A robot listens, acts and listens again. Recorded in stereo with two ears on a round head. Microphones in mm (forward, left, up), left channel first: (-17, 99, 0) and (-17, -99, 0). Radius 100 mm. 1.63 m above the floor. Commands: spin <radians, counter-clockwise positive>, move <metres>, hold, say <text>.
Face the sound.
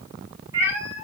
spin -0.52
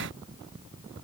hold
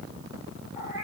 spin -0.26
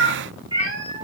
spin -0.35
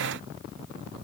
hold
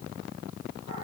hold
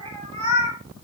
spin -0.52
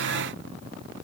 hold
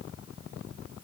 hold
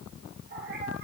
say I heard a cat meowing, but can't make it out now. It was about straight ahead or 120° right.